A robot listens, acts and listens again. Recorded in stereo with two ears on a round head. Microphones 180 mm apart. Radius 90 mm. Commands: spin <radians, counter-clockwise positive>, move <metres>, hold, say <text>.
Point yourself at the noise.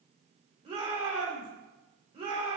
spin -0.61
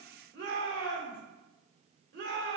spin -1.83
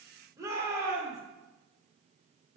spin -0.35
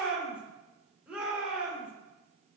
say Found it: a shout, straight ahead.